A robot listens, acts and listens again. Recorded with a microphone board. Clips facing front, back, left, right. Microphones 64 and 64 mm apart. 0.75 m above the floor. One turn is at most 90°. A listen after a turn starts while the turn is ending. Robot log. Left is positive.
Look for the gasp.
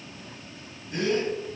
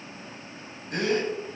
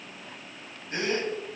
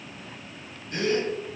note: The gasp: 155° left.
cmd yaw +90
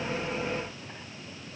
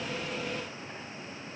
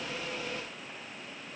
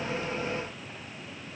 note: Nothing new. It was at 65° left.
cmd yaw +65
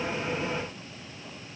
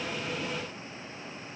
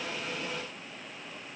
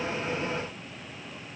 end: Facing where the gasp came from. I can't hear it now.